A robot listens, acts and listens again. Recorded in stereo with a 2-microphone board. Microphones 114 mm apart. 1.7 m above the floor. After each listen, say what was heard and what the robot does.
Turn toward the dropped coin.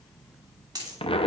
The dropped coin: about 35° right or 145° right. Turn 35° right.
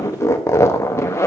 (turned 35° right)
Keep listening.
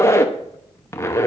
I heard a dropped coin, but can't make it out now. It was about straight ahead or 110° right.